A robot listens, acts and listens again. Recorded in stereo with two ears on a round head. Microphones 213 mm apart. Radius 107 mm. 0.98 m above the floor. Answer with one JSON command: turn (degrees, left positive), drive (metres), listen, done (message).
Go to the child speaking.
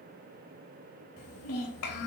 {"turn": 70}
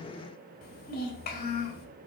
{"turn": 40}
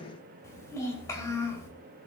{"turn": 15}
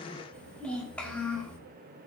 {"drive": 1.0}
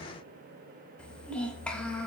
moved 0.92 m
{"drive": 1.0}
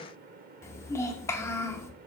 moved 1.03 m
{"turn": 10}
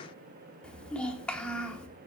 {"drive": 1.0}
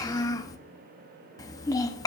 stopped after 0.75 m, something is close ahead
{"turn": 15}
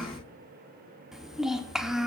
{"done": "Arrived at the child speaking, straight ahead."}